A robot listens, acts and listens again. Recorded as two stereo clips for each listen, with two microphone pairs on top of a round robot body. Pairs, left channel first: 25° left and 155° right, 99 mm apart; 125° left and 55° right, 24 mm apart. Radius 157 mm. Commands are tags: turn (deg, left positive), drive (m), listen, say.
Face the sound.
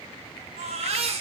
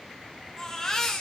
<turn deg="-165"/>
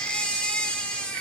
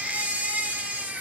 <turn deg="-55"/>
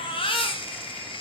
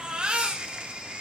<say>Facing the baby crying.</say>